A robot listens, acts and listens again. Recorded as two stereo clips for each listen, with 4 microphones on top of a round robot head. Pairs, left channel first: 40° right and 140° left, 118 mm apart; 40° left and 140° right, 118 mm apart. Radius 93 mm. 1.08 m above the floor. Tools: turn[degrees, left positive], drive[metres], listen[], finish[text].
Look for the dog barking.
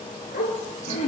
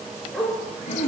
Thought: The dog barking: 55° right.
Action: turn[-55]
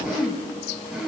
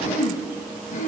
Action: listen[]
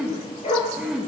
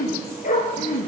Thought: The dog barking is now 10° left.
Action: turn[10]
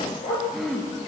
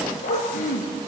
Action: finish[Found it: a dog barking, straight ahead.]